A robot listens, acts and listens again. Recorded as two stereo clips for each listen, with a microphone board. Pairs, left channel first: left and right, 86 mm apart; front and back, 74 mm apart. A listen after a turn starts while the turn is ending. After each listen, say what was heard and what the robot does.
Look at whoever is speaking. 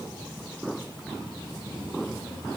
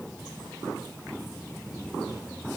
Keep listening.
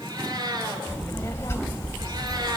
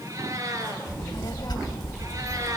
The child speaking: 30° left. Turn 30° left.
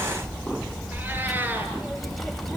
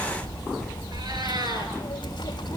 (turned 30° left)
Facing the child speaking.